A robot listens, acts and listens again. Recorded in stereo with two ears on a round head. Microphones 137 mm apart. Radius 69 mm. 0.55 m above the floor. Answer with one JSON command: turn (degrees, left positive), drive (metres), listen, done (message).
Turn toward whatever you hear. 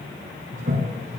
{"turn": -55}
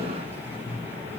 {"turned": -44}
{"turn": -15}
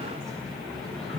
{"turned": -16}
{"done": "Found it: a toilet flushing, straight ahead."}